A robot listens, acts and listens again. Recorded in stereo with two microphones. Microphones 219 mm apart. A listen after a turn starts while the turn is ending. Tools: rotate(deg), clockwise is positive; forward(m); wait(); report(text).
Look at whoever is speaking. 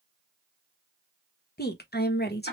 rotate(-45)
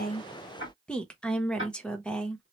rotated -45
report("Facing the woman speaking.")